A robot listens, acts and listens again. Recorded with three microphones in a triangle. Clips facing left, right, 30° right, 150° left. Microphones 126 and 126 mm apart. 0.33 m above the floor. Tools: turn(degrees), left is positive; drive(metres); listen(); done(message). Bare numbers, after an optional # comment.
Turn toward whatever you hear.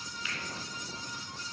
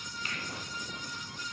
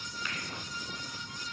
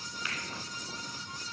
# The finger snap: 125° right.
turn(-125)
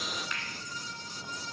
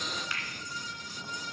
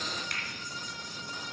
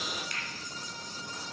done("Found it: a finger snap, straight ahead.")